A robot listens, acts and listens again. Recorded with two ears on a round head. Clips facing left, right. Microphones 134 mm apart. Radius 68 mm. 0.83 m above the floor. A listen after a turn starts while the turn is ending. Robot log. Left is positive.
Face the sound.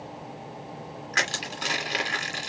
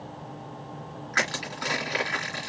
note: The crushing: about 30° left or 150° left.
cmd yaw +30
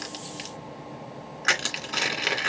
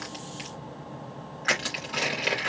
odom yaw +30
note: So it is at 120° left.
cmd yaw +120
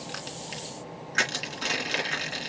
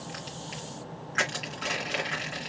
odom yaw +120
note: The crushing is now 40° left.
cmd yaw +40
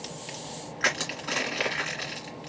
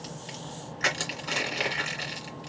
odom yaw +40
note: The crushing is now 10° right.
cmd yaw -10
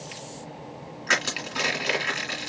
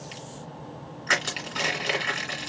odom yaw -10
end: Found it: crushing, straight ahead.